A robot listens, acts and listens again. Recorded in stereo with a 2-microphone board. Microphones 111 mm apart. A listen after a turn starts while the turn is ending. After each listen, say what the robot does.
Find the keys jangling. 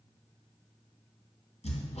Keep listening.
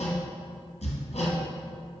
Keep listening.
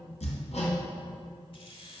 Turn 50° left.
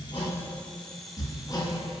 Keep listening.
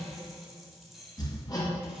Facing the keys jangling, 1 to 2 m away.